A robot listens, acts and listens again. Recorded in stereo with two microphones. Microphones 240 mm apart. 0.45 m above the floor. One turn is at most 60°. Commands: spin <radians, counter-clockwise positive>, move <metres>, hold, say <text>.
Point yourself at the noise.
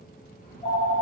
spin 0.52
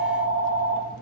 say Found it: a phone ringing, straight ahead, under 1 m away.